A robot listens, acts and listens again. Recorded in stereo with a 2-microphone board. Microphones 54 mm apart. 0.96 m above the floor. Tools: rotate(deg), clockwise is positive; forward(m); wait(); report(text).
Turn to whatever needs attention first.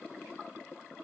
wait()
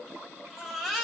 rotate(30)
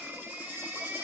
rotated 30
rotate(145)
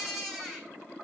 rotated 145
report("Facing the baby crying, 2 to 4 m away.")